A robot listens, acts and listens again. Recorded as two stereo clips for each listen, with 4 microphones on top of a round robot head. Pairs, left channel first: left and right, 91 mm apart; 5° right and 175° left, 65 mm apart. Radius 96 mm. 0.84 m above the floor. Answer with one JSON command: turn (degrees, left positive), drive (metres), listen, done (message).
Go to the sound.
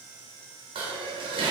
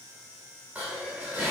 {"turn": -115}
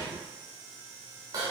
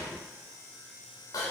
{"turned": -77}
{"turn": -35}
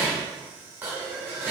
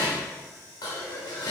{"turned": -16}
{"turn": -20}
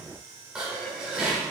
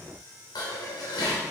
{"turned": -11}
{"turn": -10}
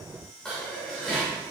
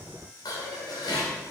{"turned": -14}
{"drive": 1.0}
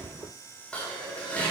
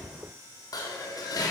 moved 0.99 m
{"turn": 10}
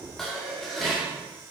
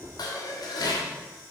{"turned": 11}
{"drive": 1.0}
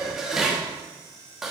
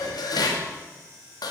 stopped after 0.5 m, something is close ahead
{"done": "I am next to the dishes clattering."}